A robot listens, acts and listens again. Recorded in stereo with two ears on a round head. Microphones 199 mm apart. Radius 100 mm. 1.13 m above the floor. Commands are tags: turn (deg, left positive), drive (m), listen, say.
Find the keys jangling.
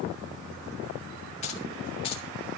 <turn deg="25"/>
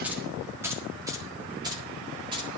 <turn deg="-25"/>
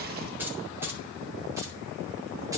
<turn deg="-10"/>
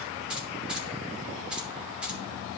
<say>Found it: keys jangling, straight ahead, 2 to 4 m away.</say>